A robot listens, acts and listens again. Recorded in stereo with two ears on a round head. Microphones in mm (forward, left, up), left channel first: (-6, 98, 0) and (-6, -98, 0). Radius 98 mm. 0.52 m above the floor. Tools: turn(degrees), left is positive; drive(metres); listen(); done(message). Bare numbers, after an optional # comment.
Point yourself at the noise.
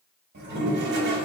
# The toilet flushing: about 50° right or 130° right.
turn(-50)
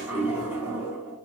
# So it is at 10° right.
turn(-10)
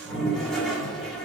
done("Facing the toilet flushing, under 1 m away.")